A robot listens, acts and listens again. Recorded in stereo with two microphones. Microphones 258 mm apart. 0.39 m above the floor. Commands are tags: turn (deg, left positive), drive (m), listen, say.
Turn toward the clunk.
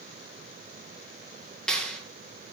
<listen/>
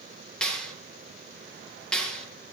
<listen/>
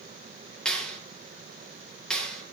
<say>I can't make out a clunk, only a clap.</say>